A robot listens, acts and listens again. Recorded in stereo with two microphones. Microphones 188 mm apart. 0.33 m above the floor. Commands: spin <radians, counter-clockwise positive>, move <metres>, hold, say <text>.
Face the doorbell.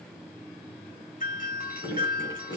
spin 0.79
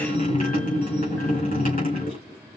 hold
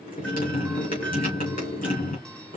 hold
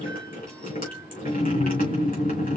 say I heard a doorbell, but can't make it out now. It was about straight ahead or 90° left.